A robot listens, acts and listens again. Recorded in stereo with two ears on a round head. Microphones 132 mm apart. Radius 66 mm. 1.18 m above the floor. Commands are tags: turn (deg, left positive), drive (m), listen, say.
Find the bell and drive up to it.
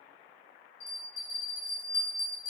<turn deg="60"/>
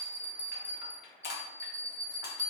<turn deg="10"/>
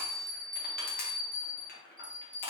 <drive m="1.0"/>
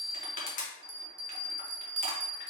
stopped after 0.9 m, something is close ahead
<say>Arrived at the bell, straight ahead.</say>